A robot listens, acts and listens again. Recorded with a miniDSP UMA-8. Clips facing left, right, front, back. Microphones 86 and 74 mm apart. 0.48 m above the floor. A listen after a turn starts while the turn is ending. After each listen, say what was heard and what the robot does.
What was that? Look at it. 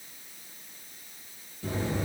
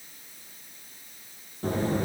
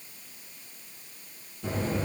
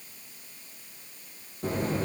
The buzzer: 135° right. Turn 135° right.
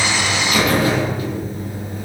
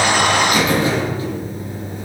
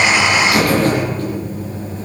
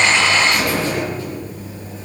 The buzzer is now 30° right. Turn 30° right.
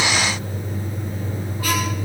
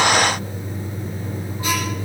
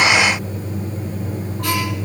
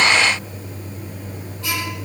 The buzzer is now 25° right. Turn 25° right.
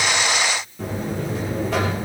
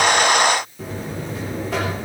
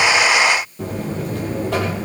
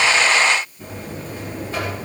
Facing the buzzer.